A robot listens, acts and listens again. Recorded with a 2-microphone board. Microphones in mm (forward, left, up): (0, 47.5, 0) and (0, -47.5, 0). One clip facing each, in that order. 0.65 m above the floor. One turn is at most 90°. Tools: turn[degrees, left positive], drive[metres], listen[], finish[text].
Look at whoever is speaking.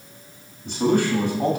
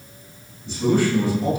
Thought: The man speaking: about 65° left or 115° left.
Action: turn[65]
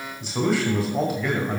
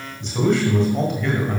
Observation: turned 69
Action: finish[Found it: a man speaking, straight ahead.]